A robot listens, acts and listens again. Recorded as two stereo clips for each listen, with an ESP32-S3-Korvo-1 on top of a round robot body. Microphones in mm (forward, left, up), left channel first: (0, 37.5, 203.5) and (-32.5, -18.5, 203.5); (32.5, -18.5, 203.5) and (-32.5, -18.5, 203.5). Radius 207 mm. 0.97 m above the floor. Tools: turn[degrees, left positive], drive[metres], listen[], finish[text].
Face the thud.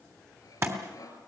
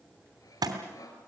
Thought: The thud: 170° right.
Action: turn[-170]
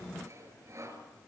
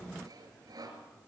Action: finish[Facing where the thud came from. I can't hear it now.]